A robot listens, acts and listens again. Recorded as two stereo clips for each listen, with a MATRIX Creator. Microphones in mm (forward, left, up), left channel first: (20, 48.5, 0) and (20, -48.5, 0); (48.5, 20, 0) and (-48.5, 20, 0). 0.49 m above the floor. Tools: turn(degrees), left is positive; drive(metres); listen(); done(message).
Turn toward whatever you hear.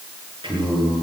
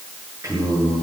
turn(degrees=-120)
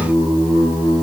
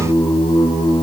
turn(degrees=-20)
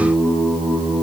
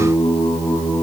done("Facing the singing, over 4 m away.")